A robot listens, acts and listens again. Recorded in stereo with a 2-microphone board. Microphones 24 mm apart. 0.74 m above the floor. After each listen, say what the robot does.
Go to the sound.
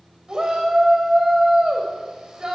Turn 30° right.
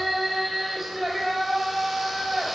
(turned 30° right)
Drive 1.0 m forward.
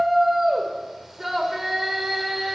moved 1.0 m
Drive 1.0 m forward.
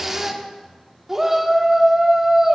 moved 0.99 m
Turn 15° right.
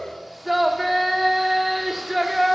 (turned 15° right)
Drive 1.0 m forward.
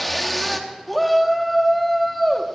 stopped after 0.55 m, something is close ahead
Turn 10° left.
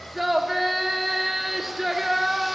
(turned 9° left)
Arrived at the shout, straight ahead.